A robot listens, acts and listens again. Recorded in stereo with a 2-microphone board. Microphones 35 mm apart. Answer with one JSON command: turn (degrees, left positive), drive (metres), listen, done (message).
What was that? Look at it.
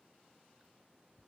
{"listen": true}
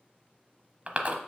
{"turn": -35}
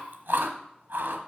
{"turn": -110}
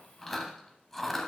{"done": "Found it: chewing, straight ahead."}